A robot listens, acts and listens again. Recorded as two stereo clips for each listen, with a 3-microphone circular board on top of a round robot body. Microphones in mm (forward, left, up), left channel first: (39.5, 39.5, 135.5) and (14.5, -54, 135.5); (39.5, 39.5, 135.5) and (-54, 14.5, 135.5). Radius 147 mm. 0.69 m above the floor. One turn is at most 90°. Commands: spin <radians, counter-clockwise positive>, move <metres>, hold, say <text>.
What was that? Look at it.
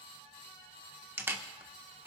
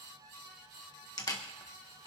spin -0.61
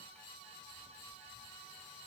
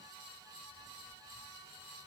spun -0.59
hold
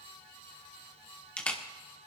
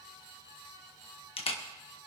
say Facing the camera shutter.